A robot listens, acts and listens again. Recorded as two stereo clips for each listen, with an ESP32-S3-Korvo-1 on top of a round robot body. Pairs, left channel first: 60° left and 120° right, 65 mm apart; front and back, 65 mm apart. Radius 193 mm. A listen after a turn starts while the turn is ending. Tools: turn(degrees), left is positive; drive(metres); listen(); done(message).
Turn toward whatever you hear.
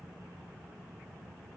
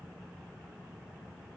listen()
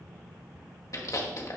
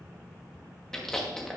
turn(degrees=80)
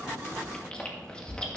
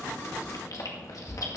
turn(degrees=-10)
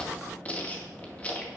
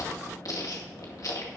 done("Facing the chewing, 2 to 4 m away.")